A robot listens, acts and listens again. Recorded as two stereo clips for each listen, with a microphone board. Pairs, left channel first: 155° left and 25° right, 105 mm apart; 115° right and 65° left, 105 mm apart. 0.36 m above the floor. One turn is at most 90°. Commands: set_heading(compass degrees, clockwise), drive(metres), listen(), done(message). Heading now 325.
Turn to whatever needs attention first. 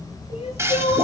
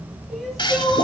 set_heading(235)
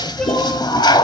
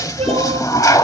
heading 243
set_heading(168)
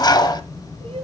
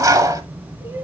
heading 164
listen()
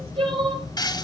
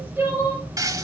done("Found it: crying, straight ahead, over 4 m away.")